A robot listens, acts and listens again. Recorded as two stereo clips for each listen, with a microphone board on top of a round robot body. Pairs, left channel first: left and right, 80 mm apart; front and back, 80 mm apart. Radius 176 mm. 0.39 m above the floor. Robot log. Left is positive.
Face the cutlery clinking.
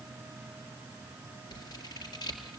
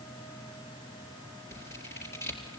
cmd idle
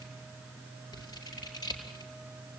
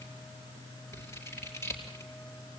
cmd idle
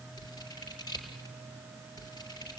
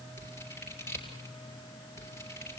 end: I can't make out cutlery clinking to turn to.